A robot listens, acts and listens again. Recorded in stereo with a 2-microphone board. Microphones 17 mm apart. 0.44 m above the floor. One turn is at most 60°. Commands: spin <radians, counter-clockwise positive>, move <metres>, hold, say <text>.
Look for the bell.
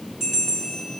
spin -0.52
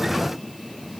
hold
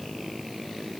hold
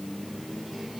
say I heard a bell, but can't make it out now. It was about 20° left or 140° right.